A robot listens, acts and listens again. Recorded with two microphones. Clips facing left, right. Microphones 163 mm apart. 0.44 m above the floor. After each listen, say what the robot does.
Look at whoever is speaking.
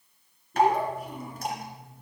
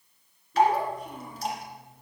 Turn 30° left.
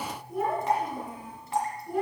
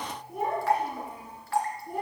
Turn 20° right.
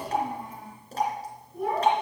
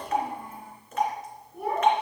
Turn 10° right.
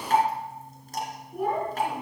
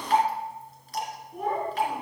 Facing the child speaking, over 4 m away.